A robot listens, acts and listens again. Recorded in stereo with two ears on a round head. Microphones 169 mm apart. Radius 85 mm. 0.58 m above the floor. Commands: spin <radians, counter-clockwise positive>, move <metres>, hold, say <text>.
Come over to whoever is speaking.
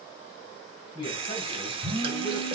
spin 0.44
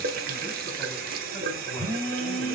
hold
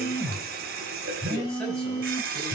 hold
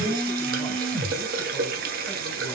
say I heard a man speaking, but can't make it out now. It was about straight ahead or 130° left. I did not reach it.